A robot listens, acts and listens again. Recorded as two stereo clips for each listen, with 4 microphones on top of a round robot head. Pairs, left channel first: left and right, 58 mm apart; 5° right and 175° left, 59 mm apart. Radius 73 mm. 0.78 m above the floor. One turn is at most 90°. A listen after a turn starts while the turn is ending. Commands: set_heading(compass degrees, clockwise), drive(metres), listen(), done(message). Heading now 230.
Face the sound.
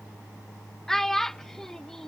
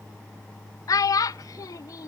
done("Facing the child speaking.")